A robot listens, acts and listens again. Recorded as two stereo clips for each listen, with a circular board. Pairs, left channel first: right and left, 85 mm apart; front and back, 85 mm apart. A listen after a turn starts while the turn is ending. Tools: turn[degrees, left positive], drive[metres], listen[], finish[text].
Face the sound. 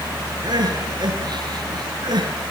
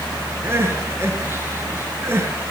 Thought: The crying: 120° left.
Action: turn[120]
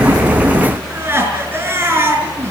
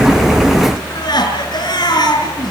Thought: The crying is now 30° left.
Action: turn[30]
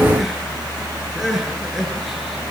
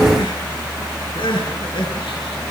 Action: finish[Found it: crying, straight ahead, over 4 m away.]